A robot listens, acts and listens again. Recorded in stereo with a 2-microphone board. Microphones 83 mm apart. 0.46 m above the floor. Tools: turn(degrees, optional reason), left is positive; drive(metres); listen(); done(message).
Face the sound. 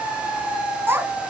turn(degrees=-30, reason="The child speaking: about 30° right or 150° right.")
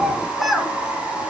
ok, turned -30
done("Facing the child speaking, 2 to 4 m away.")